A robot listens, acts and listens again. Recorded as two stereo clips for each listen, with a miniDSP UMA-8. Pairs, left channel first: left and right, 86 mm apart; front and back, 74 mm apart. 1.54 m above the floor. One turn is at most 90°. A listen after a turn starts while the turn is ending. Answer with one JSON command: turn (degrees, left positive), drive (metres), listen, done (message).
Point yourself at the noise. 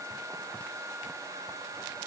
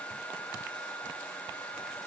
{"listen": true}
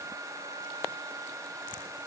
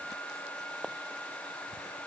{"listen": true}
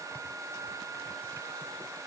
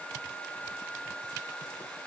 {"done": "I can't make out anything."}